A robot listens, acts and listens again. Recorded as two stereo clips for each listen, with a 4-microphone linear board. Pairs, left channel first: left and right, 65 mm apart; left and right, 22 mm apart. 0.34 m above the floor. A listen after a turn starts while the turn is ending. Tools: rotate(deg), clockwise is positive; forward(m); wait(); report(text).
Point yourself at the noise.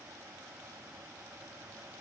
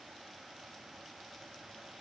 wait()
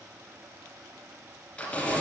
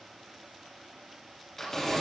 rotate(-30)
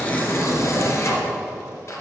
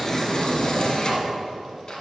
rotate(-140)
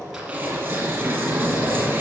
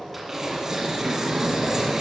rotate(25)
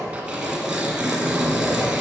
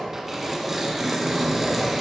report("Facing the tearing paper, 1 to 2 m away.")